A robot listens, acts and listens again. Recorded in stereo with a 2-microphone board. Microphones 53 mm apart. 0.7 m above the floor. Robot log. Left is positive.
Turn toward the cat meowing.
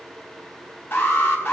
cmd idle
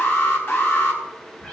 note: The cat meowing: about 30° left or 150° left.
cmd yaw +30
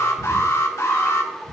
end: Found it: a cat meowing, straight ahead, 2 to 4 m away.